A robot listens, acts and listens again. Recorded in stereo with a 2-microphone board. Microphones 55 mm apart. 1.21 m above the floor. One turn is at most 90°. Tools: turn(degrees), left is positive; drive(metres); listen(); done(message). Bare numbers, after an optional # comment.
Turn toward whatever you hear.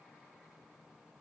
listen()
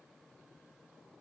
listen()
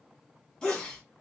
turn(30)
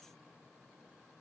listen()
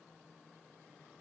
done("I heard a sneeze, but can't make it out now. It was about 20° right or 140° left.")